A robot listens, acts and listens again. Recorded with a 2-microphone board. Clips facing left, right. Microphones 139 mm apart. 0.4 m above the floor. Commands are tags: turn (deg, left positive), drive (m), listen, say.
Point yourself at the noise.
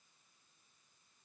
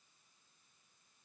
<listen/>
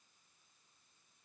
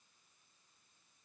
<listen/>
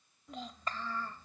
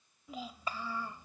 <turn deg="-30"/>
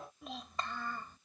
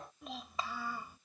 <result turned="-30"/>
<turn deg="-30"/>
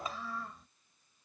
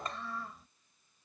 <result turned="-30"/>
<turn deg="-30"/>
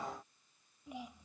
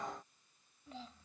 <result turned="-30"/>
<turn deg="15"/>
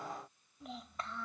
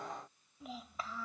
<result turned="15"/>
<say>Facing the child speaking.</say>